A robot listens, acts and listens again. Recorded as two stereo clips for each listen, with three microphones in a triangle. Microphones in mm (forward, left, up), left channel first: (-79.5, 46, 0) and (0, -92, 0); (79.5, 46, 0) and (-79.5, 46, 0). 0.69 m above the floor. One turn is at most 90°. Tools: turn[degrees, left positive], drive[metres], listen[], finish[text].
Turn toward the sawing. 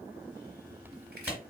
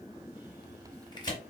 Action: listen[]
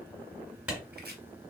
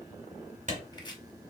Action: listen[]
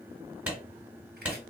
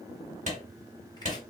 Action: finish[I can't make out sawing to turn to.]